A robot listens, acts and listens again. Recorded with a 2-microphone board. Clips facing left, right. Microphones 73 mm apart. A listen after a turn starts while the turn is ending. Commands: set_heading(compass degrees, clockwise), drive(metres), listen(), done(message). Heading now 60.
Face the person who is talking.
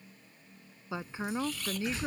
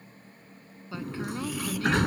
set_heading(40)
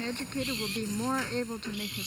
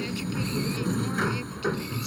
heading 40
listen()
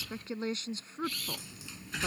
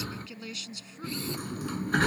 set_heading(260)
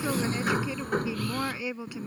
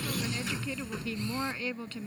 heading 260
set_heading(245)
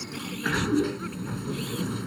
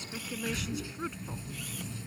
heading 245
listen()
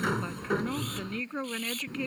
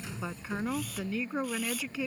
done("Facing the woman speaking.")